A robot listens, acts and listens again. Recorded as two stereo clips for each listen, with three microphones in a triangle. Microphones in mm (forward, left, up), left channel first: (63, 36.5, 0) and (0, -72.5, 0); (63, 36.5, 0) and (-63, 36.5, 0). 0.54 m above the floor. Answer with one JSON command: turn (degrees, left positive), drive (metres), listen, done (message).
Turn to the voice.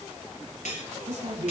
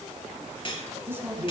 {"turn": -110}
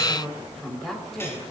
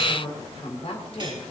{"turn": -25}
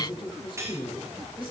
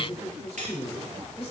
{"turn": 15}
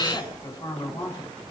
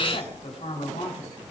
{"done": "Facing the woman speaking."}